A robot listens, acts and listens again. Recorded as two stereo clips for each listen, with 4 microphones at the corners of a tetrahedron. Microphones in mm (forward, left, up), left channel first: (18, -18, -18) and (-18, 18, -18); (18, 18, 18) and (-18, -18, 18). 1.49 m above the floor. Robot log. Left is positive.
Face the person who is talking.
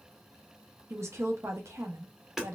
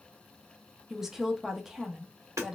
note: The woman speaking: 145° left.
cmd yaw +145
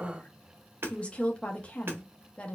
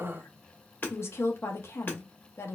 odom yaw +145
note: The woman speaking is now 20° left.
cmd yaw +20
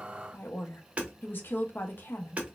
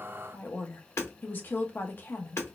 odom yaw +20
end: Facing the woman speaking.